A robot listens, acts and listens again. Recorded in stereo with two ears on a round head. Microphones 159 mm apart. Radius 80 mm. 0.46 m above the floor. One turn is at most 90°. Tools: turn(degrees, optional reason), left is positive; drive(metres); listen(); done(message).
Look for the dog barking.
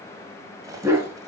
turn(degrees=-15, reason="The dog barking: about 15° right or 165° right.")
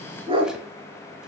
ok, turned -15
turn(degrees=-90, reason="So it is at 150° right.")
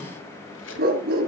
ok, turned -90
turn(degrees=-55, reason="The dog barking is now 55° right.")
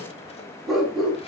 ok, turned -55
done("Facing the dog barking.")